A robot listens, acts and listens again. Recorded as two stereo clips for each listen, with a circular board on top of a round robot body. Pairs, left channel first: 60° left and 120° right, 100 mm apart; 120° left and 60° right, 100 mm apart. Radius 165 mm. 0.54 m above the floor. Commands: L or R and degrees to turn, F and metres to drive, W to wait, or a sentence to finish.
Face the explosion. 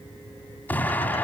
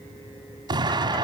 R15
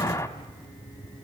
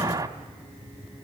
Found it: an explosion, straight ahead, 1 to 2 m away.